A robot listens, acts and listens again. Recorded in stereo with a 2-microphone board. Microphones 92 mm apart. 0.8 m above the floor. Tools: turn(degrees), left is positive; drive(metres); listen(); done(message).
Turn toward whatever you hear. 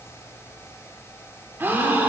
turn(degrees=-25)
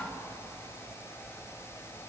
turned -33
listen()
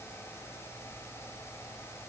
done("I heard a gasp, but can't make it out now. It was about 10° left or 125° right.")